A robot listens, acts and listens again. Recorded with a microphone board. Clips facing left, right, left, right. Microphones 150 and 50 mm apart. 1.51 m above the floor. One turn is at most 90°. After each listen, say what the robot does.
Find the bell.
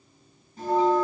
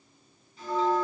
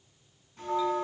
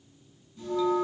Turn 45° left.
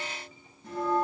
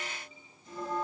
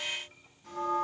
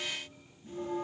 Turn 85° left.
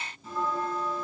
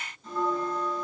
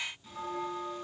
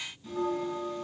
Found it: a bell, straight ahead, over 4 m away.